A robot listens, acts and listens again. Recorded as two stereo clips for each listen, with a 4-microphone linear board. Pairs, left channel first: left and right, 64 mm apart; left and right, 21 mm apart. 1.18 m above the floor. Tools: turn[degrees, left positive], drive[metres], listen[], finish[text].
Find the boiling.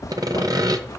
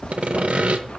Action: listen[]
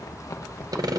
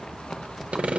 Action: listen[]
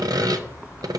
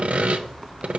Action: finish[I can't make out boiling to turn to.]